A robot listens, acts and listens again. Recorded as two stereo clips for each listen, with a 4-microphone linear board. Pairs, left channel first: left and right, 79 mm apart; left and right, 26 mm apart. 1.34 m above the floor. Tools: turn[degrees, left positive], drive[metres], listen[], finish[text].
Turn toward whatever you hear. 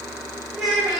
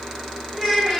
Action: turn[30]
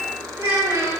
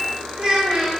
Thought: So it is at 35° right.
Action: turn[-35]
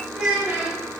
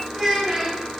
Thought: The child speaking is now 20° right.
Action: turn[-20]
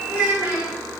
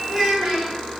Thought: The child speaking is now 25° right.
Action: turn[-25]
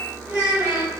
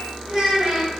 Thought: The child speaking is now 25° right.
Action: turn[-25]
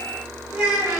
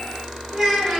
Thought: The child speaking is now 10° right.
Action: turn[-10]
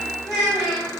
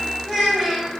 Action: finish[Facing the child speaking, 1 to 2 m away.]